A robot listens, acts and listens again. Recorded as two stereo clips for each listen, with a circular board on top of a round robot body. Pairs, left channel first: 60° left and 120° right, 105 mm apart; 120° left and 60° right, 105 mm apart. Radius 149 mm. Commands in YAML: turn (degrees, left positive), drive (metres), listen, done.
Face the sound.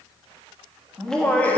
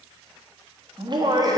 turn: -15
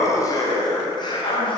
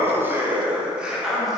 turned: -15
turn: 30
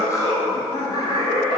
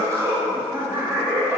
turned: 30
turn: 10
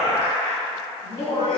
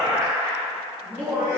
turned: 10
turn: 10
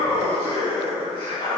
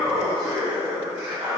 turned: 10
done: "Found it: laughter, straight ahead."